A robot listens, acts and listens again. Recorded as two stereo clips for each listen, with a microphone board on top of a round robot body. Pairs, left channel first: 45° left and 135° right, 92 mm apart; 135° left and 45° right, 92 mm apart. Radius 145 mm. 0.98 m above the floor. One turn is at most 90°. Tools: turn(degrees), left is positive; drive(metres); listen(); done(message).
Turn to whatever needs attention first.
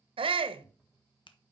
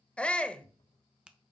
turn(degrees=-90)
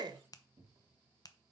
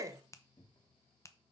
turn(degrees=-90)
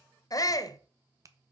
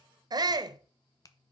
done("Facing the shout, under 1 m away.")